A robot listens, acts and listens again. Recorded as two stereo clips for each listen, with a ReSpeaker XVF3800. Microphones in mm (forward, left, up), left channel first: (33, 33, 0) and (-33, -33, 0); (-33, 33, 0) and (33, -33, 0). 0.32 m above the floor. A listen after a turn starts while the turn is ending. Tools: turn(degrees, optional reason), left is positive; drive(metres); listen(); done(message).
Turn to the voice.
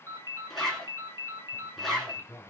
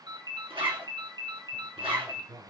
turn(degrees=-10, reason="The man speaking: 10° right.")
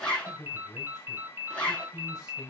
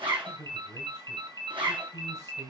done("Found it: a man speaking, straight ahead.")